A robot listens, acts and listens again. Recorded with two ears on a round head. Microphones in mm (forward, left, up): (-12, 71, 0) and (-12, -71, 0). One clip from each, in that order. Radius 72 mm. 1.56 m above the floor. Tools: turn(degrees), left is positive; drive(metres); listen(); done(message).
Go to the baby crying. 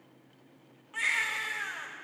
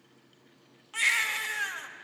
turn(degrees=-75)
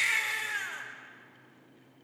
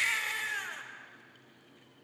turn(degrees=-10)
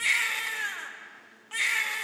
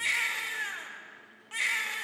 drive(metres=1.0)
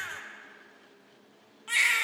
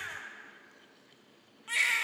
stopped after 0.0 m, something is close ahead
turn(degrees=10)
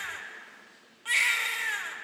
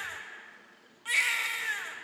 done("Something is in my way. I am facing the baby crying but have not reached it.")